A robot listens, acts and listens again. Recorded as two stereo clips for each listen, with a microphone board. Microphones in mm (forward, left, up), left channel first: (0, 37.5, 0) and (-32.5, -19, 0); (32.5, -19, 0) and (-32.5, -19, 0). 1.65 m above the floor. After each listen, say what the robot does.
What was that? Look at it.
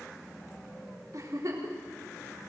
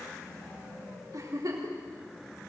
Turn 155° right.
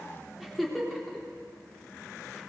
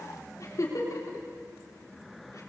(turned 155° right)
Turn 30° right.
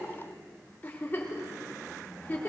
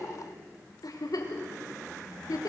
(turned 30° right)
Facing the giggle, 2 to 4 m away.